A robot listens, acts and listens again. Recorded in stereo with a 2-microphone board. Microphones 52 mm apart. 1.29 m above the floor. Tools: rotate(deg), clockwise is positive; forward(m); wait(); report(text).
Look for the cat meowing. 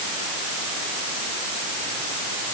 wait()
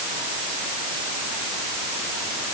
wait()
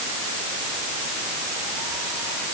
report("I can't make out a cat meowing.")